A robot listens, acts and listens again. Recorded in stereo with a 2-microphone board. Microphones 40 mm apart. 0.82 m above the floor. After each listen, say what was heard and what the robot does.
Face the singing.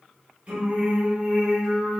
Turn 30° right.
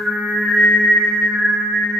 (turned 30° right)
The singing: about 25° right or 155° right. Turn 25° right.
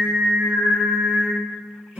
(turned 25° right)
So it is at 145° right. Turn 145° right.
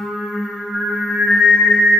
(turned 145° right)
The singing is now 15° right. Turn 15° right.
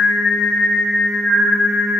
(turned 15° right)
Facing the singing, 2 to 4 m away.